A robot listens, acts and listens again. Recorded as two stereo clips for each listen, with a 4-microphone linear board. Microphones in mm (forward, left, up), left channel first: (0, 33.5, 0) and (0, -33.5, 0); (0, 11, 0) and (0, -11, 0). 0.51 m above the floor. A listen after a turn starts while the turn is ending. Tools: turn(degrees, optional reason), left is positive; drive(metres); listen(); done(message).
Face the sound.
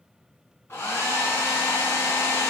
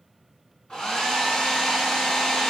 turn(degrees=40, reason="The hair dryer: about 40° left or 140° left.")
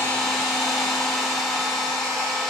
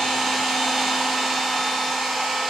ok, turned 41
done("Found it: a hair dryer, straight ahead, under 1 m away.")